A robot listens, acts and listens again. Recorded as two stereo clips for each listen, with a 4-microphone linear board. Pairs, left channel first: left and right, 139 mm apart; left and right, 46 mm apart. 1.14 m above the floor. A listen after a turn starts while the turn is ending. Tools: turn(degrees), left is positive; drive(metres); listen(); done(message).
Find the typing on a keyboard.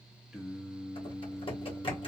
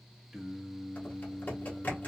turn(degrees=40)
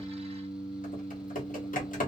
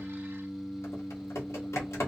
turn(degrees=100)
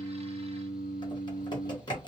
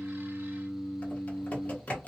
turn(degrees=30)
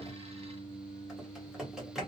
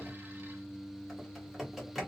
done("Found it: typing on a keyboard, straight ahead.")